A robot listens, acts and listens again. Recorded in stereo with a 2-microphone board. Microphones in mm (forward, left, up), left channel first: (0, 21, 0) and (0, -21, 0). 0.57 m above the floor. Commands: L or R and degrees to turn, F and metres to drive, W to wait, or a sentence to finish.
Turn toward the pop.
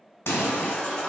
L90
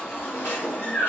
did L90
Facing where the pop came from. I can't hear it now.